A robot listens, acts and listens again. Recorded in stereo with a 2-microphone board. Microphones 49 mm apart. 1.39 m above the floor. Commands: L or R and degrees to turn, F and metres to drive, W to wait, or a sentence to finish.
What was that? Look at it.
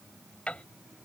L25
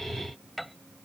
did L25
Facing the piano.